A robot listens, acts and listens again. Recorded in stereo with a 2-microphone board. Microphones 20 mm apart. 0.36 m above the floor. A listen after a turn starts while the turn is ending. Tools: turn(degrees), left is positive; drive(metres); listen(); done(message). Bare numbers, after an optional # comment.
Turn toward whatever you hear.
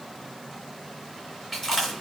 turn(30)
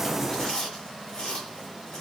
# So it is at 140° left.
turn(140)
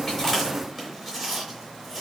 done("Found it: chewing, straight ahead, 2 to 4 m away.")